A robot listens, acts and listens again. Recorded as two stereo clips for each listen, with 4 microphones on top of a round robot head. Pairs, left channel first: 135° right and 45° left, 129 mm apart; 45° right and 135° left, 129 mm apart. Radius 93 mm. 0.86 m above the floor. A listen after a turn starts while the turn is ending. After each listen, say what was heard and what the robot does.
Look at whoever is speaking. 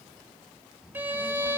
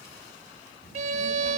The child speaking: 40° right. Turn 40° right.
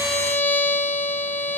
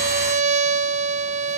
Keep listening.
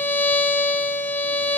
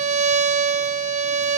Keep listening.
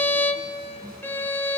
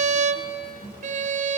The child speaking is now 10° right. Turn 10° right.
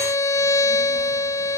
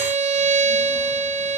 Keep listening.
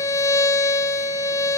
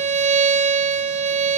Keep listening.
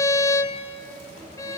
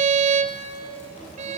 Facing the child speaking, over 4 m away.